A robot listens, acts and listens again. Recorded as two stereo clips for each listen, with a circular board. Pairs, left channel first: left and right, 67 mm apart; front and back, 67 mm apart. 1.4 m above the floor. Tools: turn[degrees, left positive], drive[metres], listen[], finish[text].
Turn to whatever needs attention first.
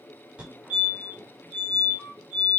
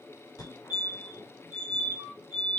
Thought: The fire alarm: 15° right.
Action: turn[-15]
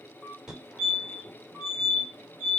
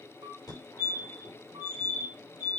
Action: finish[Facing the fire alarm, over 4 m away.]